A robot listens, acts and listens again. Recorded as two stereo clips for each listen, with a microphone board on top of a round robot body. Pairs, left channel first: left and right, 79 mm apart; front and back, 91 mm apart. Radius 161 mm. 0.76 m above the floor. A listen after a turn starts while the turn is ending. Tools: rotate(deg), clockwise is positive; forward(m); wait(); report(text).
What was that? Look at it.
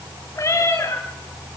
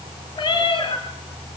rotate(-35)
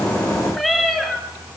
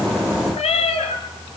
report("Facing the cat meowing, 2 to 4 m away.")